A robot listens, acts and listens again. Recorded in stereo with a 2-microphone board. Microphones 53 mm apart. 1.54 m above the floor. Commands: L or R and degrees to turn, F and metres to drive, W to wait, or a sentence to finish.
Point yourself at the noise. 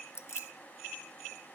L55
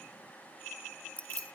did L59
L30
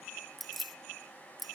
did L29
Found it: keys jangling, straight ahead.